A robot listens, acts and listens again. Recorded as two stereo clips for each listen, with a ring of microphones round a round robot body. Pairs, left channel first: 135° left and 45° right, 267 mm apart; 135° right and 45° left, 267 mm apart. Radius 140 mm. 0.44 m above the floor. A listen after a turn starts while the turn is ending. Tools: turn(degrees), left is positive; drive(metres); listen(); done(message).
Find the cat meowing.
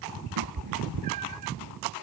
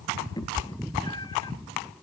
turn(degrees=-60)
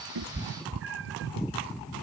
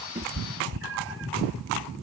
done("Facing the cat meowing.")